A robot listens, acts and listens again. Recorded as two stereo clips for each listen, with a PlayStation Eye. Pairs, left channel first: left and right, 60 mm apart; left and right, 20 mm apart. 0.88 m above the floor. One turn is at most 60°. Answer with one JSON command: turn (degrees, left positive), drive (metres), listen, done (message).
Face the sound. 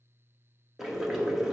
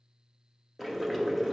{"turn": -30}
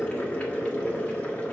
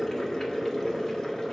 {"turn": 20}
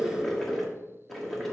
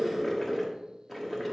{"done": "Found it: boiling, straight ahead, 1 to 2 m away."}